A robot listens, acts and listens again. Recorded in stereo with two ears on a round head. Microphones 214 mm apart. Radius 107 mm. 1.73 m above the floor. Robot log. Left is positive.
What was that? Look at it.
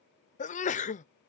note: The sneeze: about 30° left or 150° left.
cmd yaw +30
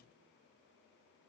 cmd idle
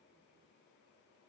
end: I heard a sneeze, but can't make it out now. It was about straight ahead or 120° left.